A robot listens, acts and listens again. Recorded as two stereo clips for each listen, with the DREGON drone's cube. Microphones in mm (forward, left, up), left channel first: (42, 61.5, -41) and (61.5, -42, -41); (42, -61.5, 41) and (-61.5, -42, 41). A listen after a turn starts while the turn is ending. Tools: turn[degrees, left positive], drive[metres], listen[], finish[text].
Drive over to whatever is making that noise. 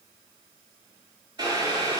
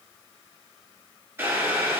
Thought: The boiling: 125° right.
Action: turn[-125]
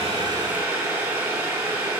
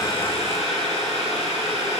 Thought: The boiling is now 20° right.
Action: turn[-20]
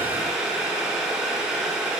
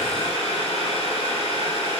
Action: drive[1.0]
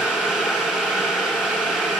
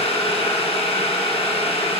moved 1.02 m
Action: drive[1.0]
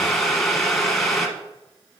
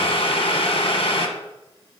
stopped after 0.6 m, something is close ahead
Thought: The boiling is now 15° left.
Action: turn[15]
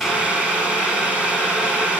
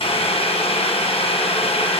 Action: finish[I am next to the boiling.]